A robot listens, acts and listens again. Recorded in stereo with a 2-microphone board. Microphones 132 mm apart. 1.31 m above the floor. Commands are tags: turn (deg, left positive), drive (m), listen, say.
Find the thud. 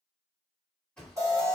<turn deg="30"/>
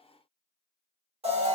<listen/>
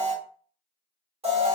<say>I heard a thud, but can't make it out now. It was about 25° right or 145° left.</say>